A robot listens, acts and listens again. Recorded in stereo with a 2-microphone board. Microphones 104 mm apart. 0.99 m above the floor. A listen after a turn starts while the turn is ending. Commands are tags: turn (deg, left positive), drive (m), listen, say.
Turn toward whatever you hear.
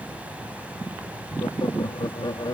<turn deg="45"/>
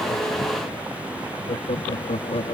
<turn deg="90"/>
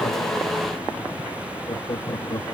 <turn deg="40"/>
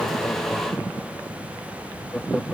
<say>Facing the laughter.</say>